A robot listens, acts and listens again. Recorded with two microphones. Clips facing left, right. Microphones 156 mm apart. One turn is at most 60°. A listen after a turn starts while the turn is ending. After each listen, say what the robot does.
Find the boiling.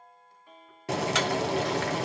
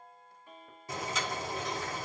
Turn 60° left.
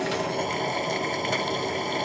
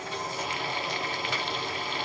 Turn 45° left.
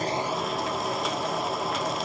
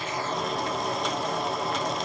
Found it: boiling, straight ahead.